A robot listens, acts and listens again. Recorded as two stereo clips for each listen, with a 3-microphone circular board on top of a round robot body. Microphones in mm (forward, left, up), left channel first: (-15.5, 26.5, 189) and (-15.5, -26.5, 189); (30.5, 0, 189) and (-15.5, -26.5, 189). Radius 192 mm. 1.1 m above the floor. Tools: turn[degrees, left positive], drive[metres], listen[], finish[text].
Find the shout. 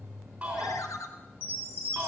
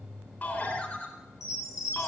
Thought: The shout: 25° right.
Action: turn[-25]
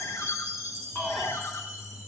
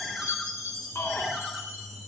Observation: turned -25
Action: finish[Found it: a shout, straight ahead, 2 to 4 m away.]